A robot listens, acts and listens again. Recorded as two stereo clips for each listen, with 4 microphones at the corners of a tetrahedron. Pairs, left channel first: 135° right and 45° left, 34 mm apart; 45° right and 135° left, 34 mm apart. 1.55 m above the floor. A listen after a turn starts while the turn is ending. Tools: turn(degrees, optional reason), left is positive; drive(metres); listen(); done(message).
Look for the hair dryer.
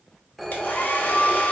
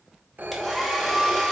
turn(degrees=-130, reason="The hair dryer: 130° right.")
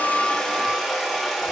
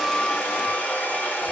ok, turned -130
turn(degrees=-35, reason="The hair dryer is now 35° right.")
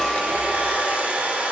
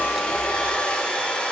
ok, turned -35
done("Facing the hair dryer.")